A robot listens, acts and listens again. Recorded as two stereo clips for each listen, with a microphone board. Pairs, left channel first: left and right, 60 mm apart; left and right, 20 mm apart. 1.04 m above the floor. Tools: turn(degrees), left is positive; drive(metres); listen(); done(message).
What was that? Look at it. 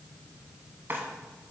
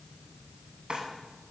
turn(degrees=-35)
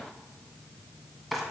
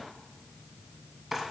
done("Found it: a drawer, straight ahead, 2 to 4 m away.")